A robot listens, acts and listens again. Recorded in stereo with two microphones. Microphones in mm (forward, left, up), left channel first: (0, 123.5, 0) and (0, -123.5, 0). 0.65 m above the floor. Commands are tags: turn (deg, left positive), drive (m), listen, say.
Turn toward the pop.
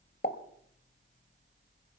<turn deg="40"/>
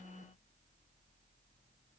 <listen/>
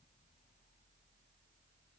<say>I heard a pop, but can't make it out now. It was about straight ahead or 100° left.</say>